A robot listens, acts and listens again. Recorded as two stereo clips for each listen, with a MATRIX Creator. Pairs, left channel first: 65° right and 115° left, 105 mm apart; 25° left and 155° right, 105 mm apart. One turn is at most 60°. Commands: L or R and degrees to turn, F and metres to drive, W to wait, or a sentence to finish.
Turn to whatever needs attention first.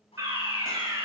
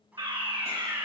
L60
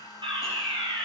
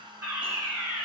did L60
L60
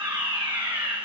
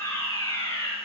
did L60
L60
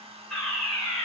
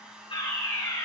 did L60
L15
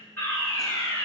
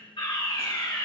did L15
Found it: a fire alarm, straight ahead.